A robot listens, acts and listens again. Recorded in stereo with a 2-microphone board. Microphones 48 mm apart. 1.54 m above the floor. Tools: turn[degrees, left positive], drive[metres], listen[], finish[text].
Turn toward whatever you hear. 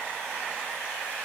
Action: listen[]
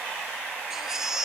Action: turn[-30]
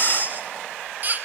Thought: So it is at 140° right.
Action: turn[-140]
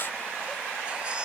Action: listen[]
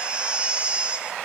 Thought: The baby crying is now 25° right.
Action: turn[-25]
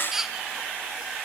Thought: The baby crying is now 10° right.
Action: turn[-10]
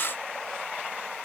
Action: listen[]
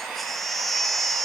Action: finish[Facing the baby crying.]